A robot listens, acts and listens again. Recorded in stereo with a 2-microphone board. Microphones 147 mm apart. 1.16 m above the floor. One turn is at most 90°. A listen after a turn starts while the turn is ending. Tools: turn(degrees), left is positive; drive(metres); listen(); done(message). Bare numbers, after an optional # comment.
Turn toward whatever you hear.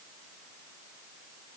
listen()
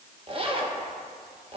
# The zipper: about 40° right or 140° right.
turn(-40)
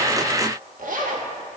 # So it is at 100° right.
turn(-90)
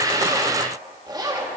# The zipper is now 30° right.
turn(-30)
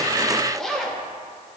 done("Found it: a zipper, straight ahead.")